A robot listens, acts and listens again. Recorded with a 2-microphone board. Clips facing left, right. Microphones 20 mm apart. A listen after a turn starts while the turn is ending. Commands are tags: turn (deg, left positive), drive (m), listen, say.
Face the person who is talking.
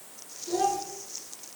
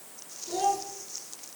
<turn deg="20"/>
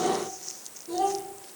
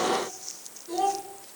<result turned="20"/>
<say>Facing the child speaking.</say>